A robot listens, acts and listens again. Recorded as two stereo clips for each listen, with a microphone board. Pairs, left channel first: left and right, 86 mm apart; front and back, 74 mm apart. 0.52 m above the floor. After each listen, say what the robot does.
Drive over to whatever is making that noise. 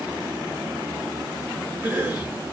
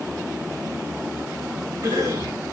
Turn 155° right.
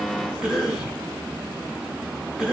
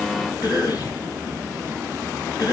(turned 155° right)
Turn 15° right.
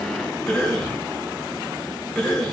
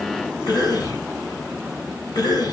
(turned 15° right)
Drive 1.0 m forward.
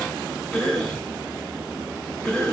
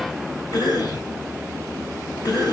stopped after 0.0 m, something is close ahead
Something is in my way. I am facing the cough but have not reached it.